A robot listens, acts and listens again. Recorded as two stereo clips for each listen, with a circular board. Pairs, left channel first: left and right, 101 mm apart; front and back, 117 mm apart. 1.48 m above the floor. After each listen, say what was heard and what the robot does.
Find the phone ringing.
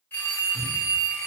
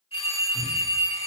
The phone ringing: 20° left. Turn 20° left.
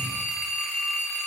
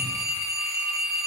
Found it: a phone ringing, straight ahead, under 1 m away.